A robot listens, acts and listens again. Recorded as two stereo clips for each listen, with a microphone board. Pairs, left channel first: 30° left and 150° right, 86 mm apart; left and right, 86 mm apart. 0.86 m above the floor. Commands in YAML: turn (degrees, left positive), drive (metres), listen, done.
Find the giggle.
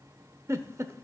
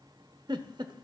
turn: -100
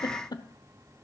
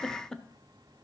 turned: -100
done: "Found it: a giggle, straight ahead, under 1 m away."